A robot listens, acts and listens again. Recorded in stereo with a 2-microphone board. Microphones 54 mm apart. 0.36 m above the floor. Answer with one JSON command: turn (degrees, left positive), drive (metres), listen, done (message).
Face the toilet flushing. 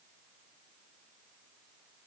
{"listen": true}
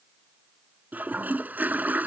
{"turn": -35}
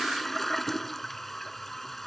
{"done": "Found it: a toilet flushing, straight ahead."}